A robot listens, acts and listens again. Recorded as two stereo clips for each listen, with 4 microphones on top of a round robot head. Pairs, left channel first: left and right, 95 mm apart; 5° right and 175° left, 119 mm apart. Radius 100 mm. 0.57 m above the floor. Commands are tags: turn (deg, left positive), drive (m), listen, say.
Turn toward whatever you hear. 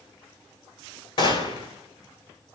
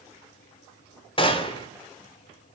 <turn deg="45"/>
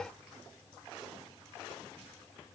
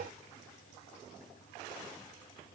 <say>I heard a gunshot from this way, but can't make it out now.</say>